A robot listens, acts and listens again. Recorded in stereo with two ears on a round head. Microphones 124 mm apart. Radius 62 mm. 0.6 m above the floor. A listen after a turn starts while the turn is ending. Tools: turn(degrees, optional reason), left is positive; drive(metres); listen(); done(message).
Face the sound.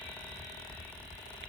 listen()
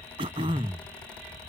turn(degrees=-40, reason="The throat clearing: about 40° right or 140° right.")
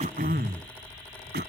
turn(degrees=-100, reason="So it is at 100° right.")
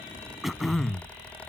done("Facing the throat clearing.")